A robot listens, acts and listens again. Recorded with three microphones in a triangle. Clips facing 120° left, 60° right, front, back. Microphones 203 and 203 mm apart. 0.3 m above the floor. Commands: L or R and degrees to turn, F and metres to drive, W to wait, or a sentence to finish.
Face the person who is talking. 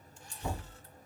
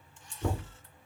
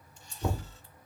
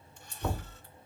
W
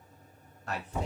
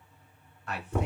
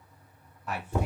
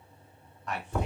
L80
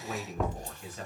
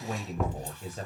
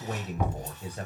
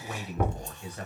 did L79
R45
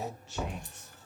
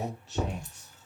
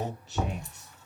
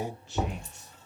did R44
R25
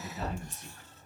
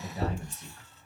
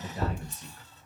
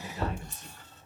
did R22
R30
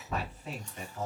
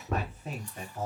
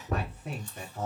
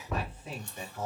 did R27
Found it: a man speaking, straight ahead.